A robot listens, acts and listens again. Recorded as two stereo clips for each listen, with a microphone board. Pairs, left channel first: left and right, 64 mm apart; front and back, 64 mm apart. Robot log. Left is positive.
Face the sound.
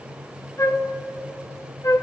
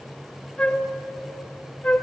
note: The flute: 70° left.
cmd yaw +70
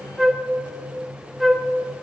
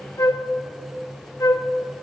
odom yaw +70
end: Facing the flute.